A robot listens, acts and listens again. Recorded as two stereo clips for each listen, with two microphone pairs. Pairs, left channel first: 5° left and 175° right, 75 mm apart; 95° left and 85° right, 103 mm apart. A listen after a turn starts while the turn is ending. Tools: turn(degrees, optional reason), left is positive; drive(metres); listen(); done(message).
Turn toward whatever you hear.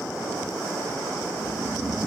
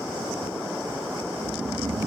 turn(degrees=-110, reason="The snoring: 110° right.")
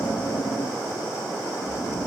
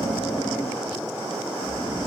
turn(degrees=25, reason="The snoring is now 25° left.")
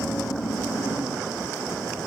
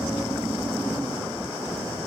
done("Found it: snoring, straight ahead, 1 to 2 m away.")